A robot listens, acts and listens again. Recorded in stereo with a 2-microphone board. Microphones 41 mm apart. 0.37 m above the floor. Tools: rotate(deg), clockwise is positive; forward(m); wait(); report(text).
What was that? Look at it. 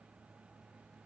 wait()
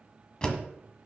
rotate(-20)
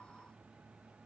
wait()
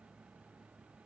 report("I heard a door slam, but can't make it out now. It was about straight ahead or 140° left.")